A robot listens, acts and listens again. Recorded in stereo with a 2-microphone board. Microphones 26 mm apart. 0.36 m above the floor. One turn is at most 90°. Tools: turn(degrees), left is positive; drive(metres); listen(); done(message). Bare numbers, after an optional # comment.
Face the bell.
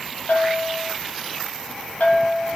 # The bell: about 65° left or 115° left.
turn(65)
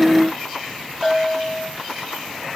done("Facing the bell, 2 to 4 m away.")